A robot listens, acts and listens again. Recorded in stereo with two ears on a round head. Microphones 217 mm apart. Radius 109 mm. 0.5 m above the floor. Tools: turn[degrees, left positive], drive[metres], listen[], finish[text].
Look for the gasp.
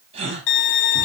Thought: The gasp: about 25° right or 155° right.
Action: turn[-25]
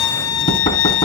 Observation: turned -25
Action: listen[]
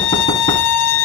Action: finish[I heard a gasp, but can't make it out now. It was about straight ahead or 130° right.]